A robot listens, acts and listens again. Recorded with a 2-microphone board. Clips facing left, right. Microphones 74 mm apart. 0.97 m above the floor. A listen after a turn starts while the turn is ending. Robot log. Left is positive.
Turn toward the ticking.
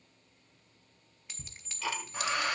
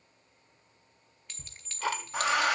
note: The ticking: about 55° right or 125° right.
cmd yaw -55
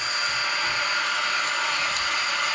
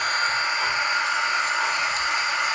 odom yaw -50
cmd idle
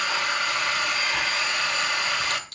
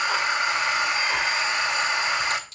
cmd idle
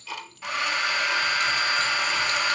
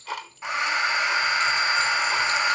note: So it is at 65° right.
cmd yaw -65
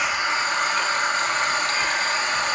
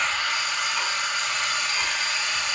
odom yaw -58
cmd idle
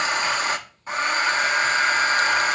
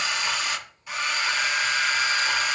cmd idle
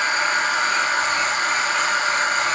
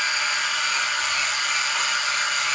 end: Facing where the ticking came from. I can't hear it now.